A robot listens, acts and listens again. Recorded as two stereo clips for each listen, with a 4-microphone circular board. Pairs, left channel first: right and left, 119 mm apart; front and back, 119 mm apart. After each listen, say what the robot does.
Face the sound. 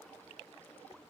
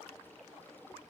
Keep listening.
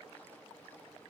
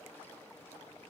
Keep listening.
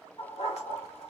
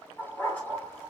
Turn 75° right.
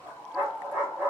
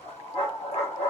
Turn 15° left.
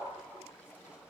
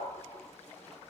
Turn 10° left.
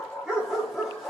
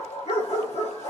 Found it: a dog barking, straight ahead, 2 to 4 m away.